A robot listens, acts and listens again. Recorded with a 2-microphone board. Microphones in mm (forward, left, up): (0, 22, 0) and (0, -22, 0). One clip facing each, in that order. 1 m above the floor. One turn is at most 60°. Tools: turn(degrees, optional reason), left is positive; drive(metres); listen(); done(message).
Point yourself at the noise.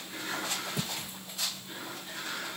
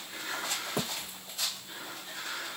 turn(degrees=-60, reason="The thud: about 60° right or 120° right.")
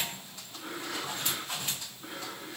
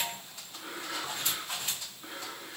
listen()
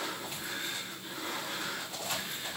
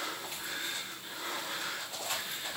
done("I heard a thud, but can't make it out now. It was about straight ahead or 60° right.")